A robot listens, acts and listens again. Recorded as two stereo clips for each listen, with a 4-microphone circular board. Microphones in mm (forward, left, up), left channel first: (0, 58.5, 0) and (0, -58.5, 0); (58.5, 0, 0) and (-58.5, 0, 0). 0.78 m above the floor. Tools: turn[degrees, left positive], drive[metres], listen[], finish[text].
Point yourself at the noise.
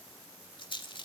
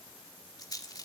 Thought: The rattle: 55° left.
Action: turn[55]
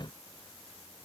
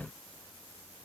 Action: listen[]
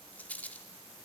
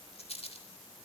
Thought: The rattle is now 15° left.
Action: turn[15]
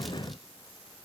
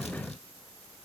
Action: listen[]
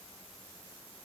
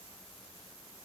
Action: listen[]
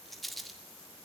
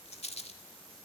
Action: finish[Found it: a rattle, straight ahead.]